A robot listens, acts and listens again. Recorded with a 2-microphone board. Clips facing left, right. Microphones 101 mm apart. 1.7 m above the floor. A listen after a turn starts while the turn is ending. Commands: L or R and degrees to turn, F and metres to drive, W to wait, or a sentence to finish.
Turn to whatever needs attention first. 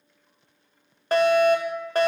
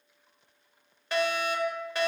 L45
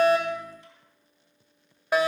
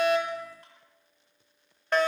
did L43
L10
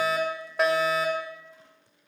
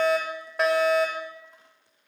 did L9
Facing the fire alarm.